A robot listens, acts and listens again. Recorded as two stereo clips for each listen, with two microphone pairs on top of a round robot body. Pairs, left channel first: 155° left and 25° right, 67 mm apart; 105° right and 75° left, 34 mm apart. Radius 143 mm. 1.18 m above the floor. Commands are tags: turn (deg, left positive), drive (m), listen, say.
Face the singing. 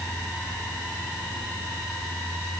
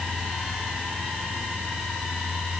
<listen/>
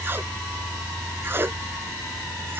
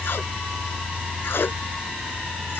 <listen/>
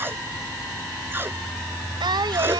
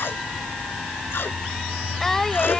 <turn deg="-25"/>
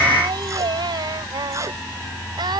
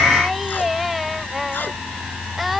<turn deg="-10"/>
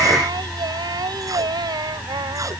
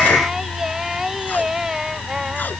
<say>Facing the singing.</say>